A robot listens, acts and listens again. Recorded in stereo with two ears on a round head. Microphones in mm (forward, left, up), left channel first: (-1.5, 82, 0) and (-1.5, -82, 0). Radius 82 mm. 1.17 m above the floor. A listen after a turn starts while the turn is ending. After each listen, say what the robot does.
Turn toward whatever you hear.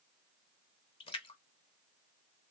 Turn 30° left.
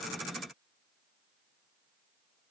Keep listening.
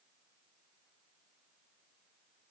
I heard a splash, but can't make it out now. It was about straight ahead or 120° left.